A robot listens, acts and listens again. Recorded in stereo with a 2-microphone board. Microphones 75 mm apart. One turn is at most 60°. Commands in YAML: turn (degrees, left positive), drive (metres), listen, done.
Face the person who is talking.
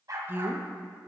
turn: -30
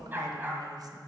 turn: -60
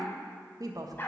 turn: -55
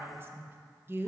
turn: -30
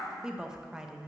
turn: -10
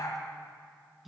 done: "Facing the woman speaking."